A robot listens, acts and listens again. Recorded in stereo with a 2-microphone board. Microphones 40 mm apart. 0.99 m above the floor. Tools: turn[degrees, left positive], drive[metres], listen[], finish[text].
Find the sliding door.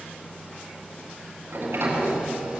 Action: turn[-90]
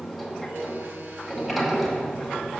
Action: finish[Found it: a sliding door, straight ahead.]